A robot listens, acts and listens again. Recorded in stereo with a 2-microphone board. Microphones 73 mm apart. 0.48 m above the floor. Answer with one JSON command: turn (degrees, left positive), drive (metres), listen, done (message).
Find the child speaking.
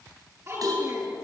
{"turn": -40}
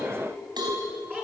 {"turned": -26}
{"turn": -25}
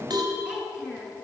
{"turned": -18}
{"turn": -10}
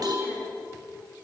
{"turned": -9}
{"listen": true}
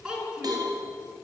{"turn": -10}
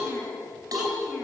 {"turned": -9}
{"turn": -10}
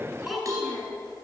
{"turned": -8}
{"done": "Found it: a child speaking, straight ahead, over 4 m away."}